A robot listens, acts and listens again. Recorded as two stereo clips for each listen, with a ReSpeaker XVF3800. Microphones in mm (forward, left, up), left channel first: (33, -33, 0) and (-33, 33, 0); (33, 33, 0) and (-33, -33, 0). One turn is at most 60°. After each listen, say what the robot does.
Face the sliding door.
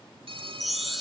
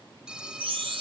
Keep listening.
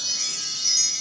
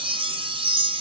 Keep listening.
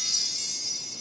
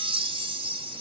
I can't make out a sliding door to turn to.